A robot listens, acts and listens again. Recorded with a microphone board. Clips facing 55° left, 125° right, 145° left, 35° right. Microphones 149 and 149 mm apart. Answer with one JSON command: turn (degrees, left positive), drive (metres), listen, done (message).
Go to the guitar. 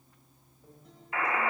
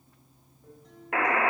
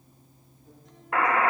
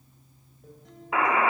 {"turn": -30}
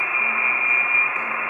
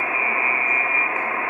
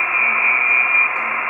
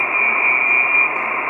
{"listen": true}
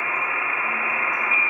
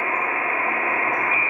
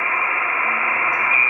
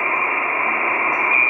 {"listen": true}
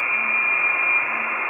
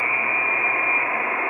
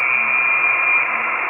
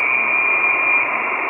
{"done": "Facing where the guitar came from. I can't hear it now. I did not reach it."}